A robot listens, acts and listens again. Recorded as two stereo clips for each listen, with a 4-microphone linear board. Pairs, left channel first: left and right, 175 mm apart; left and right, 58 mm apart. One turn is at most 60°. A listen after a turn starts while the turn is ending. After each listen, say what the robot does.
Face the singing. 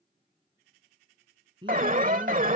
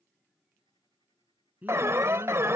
Turn 30° right.
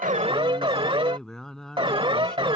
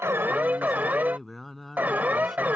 Facing the singing.